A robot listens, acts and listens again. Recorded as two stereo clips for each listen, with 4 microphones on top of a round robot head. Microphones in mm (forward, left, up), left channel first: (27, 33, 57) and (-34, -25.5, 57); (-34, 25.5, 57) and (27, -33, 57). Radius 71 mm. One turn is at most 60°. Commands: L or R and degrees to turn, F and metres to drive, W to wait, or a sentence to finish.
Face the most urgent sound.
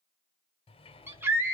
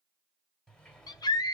L60
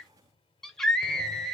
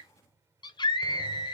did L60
L60
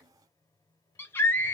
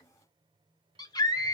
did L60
L60
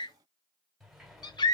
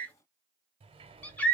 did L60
L60
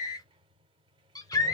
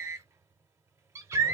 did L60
Found it: a scream, straight ahead.